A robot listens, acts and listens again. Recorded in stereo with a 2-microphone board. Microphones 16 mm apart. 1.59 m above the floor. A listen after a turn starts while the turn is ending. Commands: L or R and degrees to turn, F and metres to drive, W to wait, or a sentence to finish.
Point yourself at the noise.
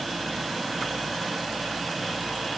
W
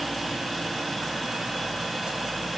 W
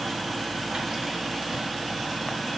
I can't make out anything.